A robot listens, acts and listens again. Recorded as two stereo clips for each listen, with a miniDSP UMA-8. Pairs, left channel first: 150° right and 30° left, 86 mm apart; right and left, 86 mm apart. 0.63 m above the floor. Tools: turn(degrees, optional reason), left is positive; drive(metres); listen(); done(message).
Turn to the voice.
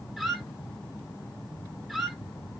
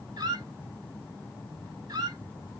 listen()
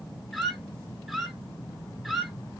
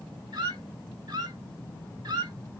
listen()
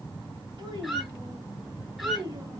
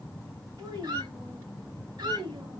turn(degrees=65, reason="The child speaking: 65° left.")
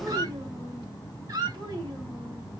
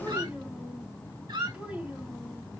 turn(degrees=15, reason="The child speaking is now 15° left.")
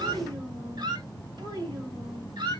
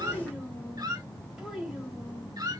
done("Facing the child speaking.")